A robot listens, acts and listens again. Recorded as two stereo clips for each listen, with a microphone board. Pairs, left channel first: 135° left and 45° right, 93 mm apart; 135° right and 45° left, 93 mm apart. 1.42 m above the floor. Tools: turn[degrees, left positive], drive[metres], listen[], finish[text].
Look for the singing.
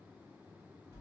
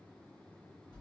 Action: listen[]
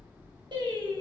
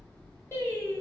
Thought: The singing: 80° right.
Action: turn[-80]
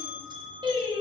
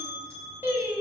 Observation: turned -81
Thought: The singing is now 30° right.
Action: turn[-30]
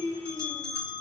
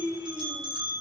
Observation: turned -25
Thought: The singing is now 20° right.
Action: turn[-20]
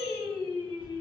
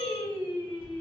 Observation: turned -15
Thought: The singing is now 30° right.
Action: turn[-30]
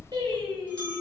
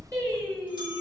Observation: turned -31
Thought: The singing is now 10° right.
Action: turn[-10]
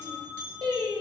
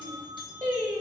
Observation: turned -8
Action: finish[Facing the singing, 1 to 2 m away.]